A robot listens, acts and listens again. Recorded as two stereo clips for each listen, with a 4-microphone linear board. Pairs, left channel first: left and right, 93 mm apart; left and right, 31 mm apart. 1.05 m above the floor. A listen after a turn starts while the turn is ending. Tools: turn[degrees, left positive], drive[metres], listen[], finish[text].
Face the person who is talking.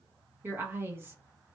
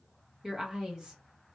Thought: The woman speaking: about 25° right or 155° right.
Action: turn[-25]
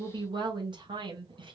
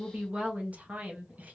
Thought: So it is at 120° right.
Action: turn[-120]
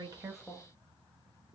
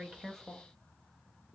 Thought: The woman speaking is now 25° left.
Action: turn[25]
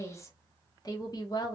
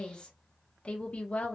Thought: The woman speaking is now 50° left.
Action: turn[50]
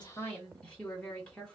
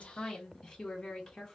Thought: The woman speaking is now 10° left.
Action: turn[10]
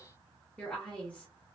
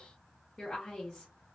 Thought: The woman speaking is now 10° left.
Action: turn[10]
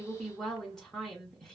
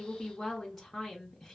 Action: finish[Found it: a woman speaking, straight ahead, 1 to 2 m away.]